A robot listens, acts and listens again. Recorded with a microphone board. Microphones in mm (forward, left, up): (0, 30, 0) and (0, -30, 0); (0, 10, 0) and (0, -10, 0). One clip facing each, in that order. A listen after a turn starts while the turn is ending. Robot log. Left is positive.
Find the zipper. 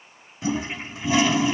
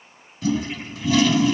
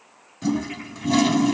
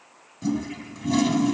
cmd idle
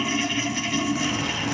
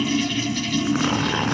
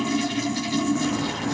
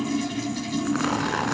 note: The zipper: about 50° right or 130° right.
cmd yaw -50
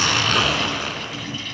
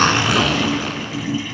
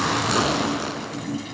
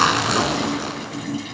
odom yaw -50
end: Facing the zipper.